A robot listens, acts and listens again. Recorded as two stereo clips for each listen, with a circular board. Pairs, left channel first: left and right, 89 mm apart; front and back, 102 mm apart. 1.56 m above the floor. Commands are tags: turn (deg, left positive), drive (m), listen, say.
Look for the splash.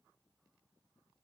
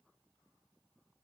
<listen/>
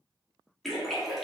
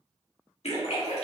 <say>Facing the splash, 1 to 2 m away.</say>